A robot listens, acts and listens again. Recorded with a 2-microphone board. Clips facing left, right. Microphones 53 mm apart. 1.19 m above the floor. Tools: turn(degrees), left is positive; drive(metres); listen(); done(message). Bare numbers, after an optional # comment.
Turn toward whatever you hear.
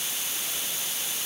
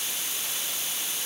listen()
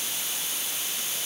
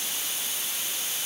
listen()
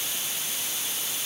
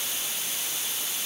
done("I can't make out anything to turn to.")